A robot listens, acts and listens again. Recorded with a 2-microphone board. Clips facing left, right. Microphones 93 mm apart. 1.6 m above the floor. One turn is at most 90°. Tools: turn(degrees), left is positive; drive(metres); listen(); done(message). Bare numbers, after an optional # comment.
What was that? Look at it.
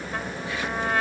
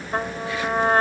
# The trumpet: about 40° right or 140° right.
turn(-40)
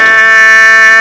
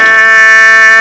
done("Found it: a trumpet, straight ahead.")